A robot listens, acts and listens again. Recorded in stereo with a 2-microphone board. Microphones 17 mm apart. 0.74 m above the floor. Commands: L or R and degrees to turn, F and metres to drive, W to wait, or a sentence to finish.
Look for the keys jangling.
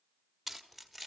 L30
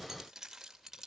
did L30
R20
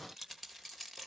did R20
Found it: keys jangling, straight ahead, 2 to 4 m away.